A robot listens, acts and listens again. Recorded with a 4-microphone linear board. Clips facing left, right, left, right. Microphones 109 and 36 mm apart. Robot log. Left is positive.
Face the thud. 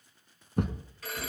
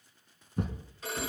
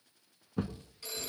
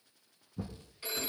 note: The thud: about 65° left or 115° left.
cmd yaw +65
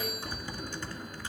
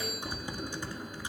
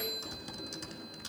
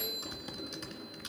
cmd idle
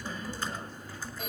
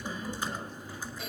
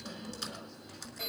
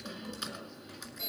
end: I heard a thud, but can't make it out now. It was about straight ahead or 50° left.